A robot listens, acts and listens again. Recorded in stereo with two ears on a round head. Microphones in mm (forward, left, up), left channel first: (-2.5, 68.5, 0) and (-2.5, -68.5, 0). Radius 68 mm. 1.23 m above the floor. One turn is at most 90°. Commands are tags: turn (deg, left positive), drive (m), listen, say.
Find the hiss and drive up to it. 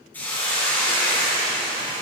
<turn deg="30"/>
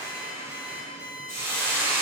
<turn deg="-20"/>
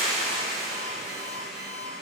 <drive m="1.0"/>
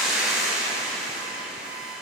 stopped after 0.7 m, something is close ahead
<say>Something is in my way. I am facing the hiss but have not reached it.</say>